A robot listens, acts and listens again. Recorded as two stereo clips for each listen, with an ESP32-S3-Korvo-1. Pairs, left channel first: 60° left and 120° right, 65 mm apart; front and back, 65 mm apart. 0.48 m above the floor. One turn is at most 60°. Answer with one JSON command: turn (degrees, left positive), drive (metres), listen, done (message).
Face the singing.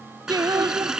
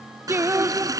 {"turn": -60}
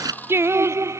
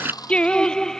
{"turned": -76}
{"turn": -60}
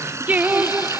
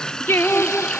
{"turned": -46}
{"turn": -60}
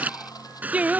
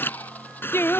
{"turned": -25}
{"turn": -55}
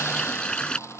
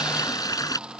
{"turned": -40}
{"turn": -15}
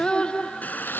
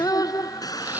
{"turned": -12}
{"turn": -15}
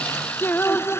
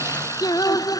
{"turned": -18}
{"done": "Found it: singing, straight ahead."}